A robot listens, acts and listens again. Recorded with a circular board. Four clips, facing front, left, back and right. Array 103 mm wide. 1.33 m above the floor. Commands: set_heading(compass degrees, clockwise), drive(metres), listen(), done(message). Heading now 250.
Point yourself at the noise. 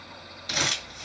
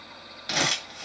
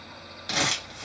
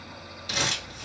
set_heading(120)
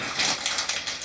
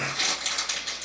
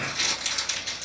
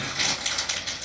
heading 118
done("Facing the crumpling.")